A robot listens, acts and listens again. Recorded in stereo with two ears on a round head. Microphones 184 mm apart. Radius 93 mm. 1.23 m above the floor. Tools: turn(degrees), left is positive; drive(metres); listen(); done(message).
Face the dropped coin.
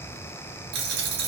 turn(degrees=-55)
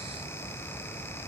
listen()
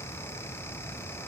done("I heard a dropped coin, but can't make it out now. It was about straight ahead or 70° right.")